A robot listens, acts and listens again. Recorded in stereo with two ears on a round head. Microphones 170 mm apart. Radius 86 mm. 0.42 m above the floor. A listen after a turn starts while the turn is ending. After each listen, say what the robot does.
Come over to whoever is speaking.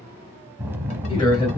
Turn 30° left.
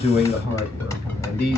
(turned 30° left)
Turn 115° left.
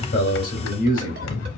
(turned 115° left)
Turn 50° left.
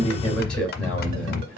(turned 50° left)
Drive 1.0 m forward.
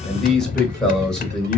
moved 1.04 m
Drive 1.0 m forward.
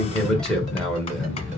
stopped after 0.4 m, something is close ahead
Arrived at the man speaking, straight ahead.